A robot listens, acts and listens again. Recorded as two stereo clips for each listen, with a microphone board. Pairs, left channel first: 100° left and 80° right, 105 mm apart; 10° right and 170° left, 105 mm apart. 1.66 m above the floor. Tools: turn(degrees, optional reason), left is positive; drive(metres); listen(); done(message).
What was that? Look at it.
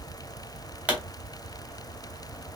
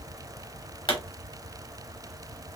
done("Found it: a pop, straight ahead, 2 to 4 m away.")